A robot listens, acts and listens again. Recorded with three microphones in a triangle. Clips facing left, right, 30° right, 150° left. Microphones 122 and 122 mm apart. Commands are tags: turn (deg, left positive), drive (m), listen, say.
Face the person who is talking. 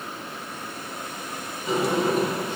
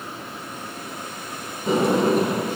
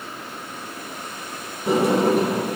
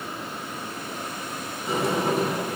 <listen/>
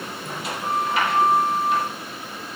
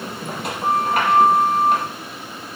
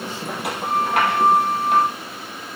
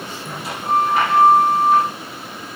<listen/>
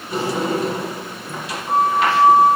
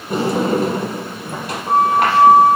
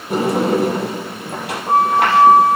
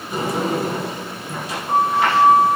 <say>I can't make out anyone speaking to turn to.</say>